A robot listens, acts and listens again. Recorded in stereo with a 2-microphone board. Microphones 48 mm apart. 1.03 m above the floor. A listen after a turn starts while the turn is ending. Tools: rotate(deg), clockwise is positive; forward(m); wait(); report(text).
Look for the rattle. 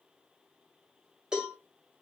wait()
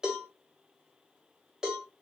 wait()
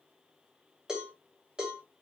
report("I can't make out a rattle, only a cowbell.")